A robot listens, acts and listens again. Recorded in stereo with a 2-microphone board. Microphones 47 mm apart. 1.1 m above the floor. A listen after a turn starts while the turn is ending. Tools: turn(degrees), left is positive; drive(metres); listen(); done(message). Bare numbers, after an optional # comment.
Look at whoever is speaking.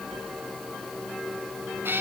listen()
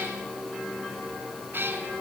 listen()
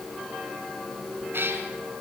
done("I can't make out anyone speaking, only a cat meowing.")